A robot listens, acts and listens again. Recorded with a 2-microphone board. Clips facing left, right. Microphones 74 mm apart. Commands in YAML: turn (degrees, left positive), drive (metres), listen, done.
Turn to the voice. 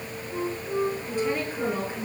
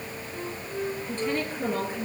turn: 30
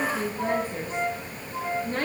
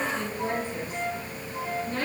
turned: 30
turn: 140
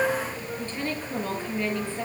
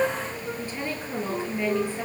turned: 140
turn: -15
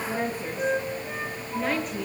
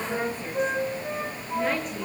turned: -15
done: "Facing the woman speaking."